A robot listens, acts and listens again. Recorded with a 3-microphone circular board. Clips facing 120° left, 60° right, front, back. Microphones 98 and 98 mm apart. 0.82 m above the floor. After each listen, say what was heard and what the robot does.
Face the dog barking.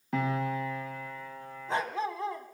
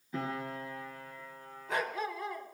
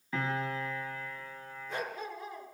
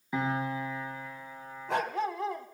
The dog barking: 175° right. Turn 175° right.
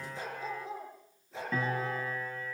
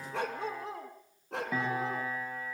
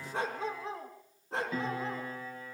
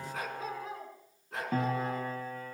The dog barking is now 60° right. Turn 60° right.
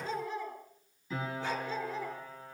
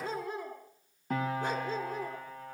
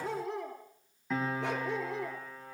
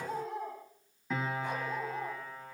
The dog barking is now 10° right. Turn 10° right.
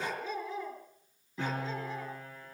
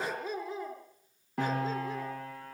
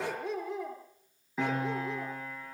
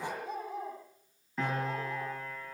Facing the dog barking, over 4 m away.